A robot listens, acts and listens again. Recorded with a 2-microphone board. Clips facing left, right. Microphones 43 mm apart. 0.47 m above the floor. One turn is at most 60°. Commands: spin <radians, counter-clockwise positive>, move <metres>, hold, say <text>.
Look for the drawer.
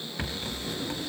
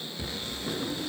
spin -0.44
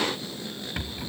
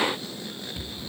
hold
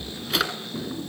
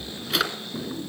say Found it: a drawer, straight ahead, 2 to 4 m away.